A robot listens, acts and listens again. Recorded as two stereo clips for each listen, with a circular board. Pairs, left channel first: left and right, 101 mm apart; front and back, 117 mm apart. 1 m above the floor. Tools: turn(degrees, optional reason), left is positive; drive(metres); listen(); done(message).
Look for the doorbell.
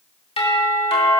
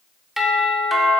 turn(degrees=95, reason="The doorbell: 95° left.")
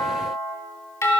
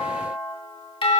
turn(degrees=30, reason="The doorbell is now 30° left.")
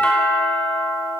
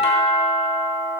turn(degrees=15, reason="The doorbell is now 15° left.")
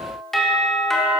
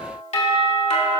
done("Facing the doorbell, 2 to 4 m away.")